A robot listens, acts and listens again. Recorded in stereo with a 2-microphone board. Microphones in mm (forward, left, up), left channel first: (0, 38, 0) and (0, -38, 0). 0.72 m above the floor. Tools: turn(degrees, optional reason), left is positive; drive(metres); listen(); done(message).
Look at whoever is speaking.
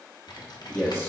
turn(degrees=25, reason="The man speaking: about 25° left or 155° left.")
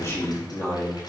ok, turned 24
turn(degrees=25, reason="The man speaking: about 25° left or 155° left.")
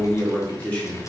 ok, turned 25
turn(degrees=15, reason="The man speaking: about 15° left or 165° left.")
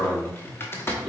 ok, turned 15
turn(degrees=30)
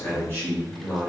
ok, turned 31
turn(degrees=25, reason="The man speaking: about 25° left or 155° left.")
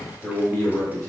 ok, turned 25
turn(degrees=135, reason="So it is at 135° left.")
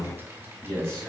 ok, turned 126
done("Found it: a man speaking, straight ahead.")